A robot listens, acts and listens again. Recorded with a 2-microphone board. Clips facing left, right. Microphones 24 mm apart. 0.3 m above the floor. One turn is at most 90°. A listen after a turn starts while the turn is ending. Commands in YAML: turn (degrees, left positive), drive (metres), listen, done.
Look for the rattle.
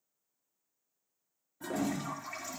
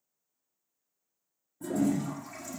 listen: true
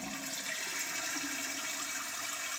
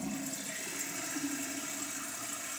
listen: true
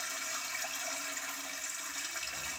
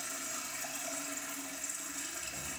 done: "I can't make out a rattle, only a toilet flushing."